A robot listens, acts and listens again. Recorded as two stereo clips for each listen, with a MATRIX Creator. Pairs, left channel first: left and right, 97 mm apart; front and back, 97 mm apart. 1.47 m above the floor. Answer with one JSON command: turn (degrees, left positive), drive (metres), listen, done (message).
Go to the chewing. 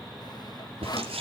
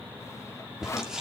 {"turn": -95}
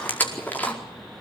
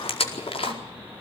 {"turn": 15}
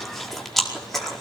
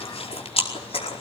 {"drive": 1.0}
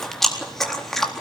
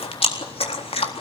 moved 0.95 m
{"drive": 1.0}
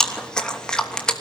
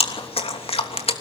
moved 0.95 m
{"turn": 10}
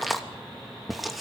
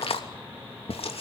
{"drive": 1.0}
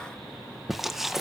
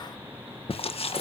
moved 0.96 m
{"drive": 1.0}
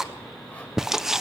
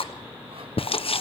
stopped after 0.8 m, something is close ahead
{"done": "Arrived at the chewing, straight ahead."}